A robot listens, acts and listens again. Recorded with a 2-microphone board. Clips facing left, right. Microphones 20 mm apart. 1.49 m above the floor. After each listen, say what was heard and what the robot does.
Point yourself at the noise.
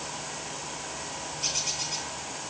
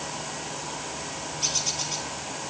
The bird: about 40° right or 140° right. Turn 40° right.
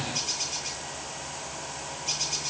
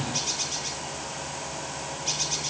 So it is at 105° right. Turn 105° right.
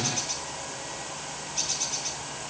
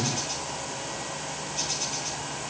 The bird is now 20° left. Turn 20° left.
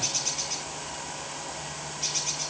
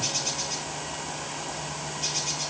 Found it: a bird, straight ahead, over 4 m away.